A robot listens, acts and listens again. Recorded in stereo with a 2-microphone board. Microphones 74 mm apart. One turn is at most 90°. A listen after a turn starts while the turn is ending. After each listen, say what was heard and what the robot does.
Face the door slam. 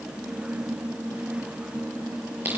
Keep listening.
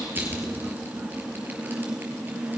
Keep listening.
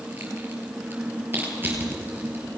I can't make out a door slam, only crushing.